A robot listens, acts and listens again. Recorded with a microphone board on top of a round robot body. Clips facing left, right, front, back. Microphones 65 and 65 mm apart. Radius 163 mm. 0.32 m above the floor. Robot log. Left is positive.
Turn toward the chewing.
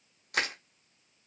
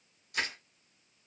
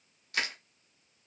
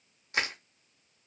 cmd idle
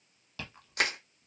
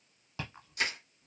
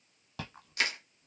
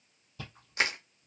note: The chewing: 20° right.
cmd yaw -20
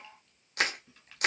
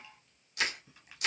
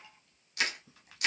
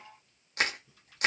cmd idle
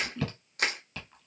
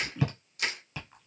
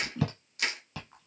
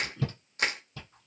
note: The chewing is now 10° right.
cmd yaw -10
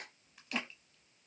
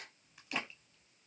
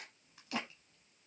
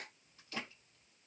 end: Facing the chewing.